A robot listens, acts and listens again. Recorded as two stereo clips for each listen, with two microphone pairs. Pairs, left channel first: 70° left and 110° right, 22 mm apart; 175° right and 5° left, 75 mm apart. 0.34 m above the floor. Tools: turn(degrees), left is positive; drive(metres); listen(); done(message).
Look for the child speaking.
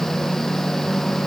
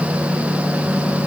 listen()
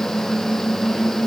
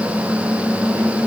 listen()
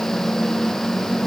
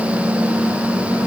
done("I can't make out a child speaking to turn to.")